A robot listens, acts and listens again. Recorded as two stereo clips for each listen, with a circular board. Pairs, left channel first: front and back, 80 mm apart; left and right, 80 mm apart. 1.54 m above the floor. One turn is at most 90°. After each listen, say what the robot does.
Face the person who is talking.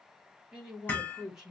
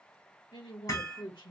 Turn 90° left.
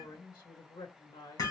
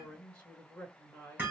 Turn 15° left.
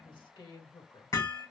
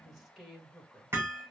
Found it: a man speaking, straight ahead.